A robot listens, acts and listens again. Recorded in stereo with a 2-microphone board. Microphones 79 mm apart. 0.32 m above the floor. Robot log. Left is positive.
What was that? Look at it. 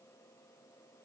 cmd idle
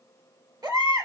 note: The baby crying: about 65° right or 115° right.
cmd yaw -65
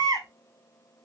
note: So it is at 50° right.
cmd yaw -50
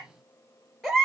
end: Facing the baby crying, 2 to 4 m away.